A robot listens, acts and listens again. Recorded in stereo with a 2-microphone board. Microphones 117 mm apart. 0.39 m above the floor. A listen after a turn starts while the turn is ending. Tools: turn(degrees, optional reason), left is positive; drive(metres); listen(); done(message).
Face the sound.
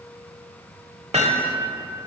turn(degrees=-60, reason="The hammering: about 60° right or 120° right.")
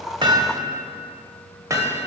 turn(degrees=-30, reason="So it is at 30° right.")
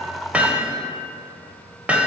turn(degrees=-15, reason="The hammering is now 15° right.")
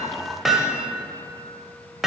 done("Found it: hammering, straight ahead, under 1 m away.")